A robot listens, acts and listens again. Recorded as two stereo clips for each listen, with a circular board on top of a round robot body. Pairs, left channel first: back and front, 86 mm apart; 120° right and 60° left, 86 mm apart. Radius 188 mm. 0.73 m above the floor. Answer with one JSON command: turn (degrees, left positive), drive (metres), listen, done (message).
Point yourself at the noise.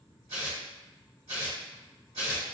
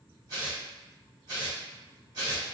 {"turn": 15}
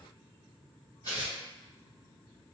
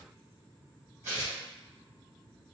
{"done": "Facing the tearing paper."}